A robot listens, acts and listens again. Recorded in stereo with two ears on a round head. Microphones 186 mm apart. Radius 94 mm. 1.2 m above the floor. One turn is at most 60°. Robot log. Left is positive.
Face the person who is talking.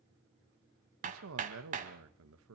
note: The man speaking: about 75° right or 105° right.
cmd yaw -60
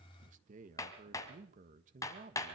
note: So it is at 40° right.
cmd yaw -40
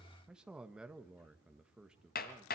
end: Found it: a man speaking, straight ahead.